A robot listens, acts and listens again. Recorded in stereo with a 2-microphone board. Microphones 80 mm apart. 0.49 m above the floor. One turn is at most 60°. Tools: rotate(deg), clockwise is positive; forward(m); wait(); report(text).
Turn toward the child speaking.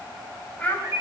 rotate(-20)
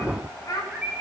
rotate(-60)
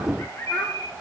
rotate(-35)
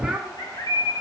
report("Found it: a child speaking, straight ahead.")